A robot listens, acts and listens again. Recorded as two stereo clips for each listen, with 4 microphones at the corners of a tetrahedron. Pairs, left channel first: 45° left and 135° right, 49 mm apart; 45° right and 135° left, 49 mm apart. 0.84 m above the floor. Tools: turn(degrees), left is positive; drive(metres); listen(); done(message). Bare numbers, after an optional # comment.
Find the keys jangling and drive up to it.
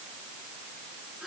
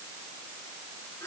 listen()
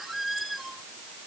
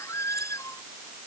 listen()
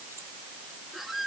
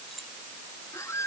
done("I can't make out keys jangling, only a squeak.")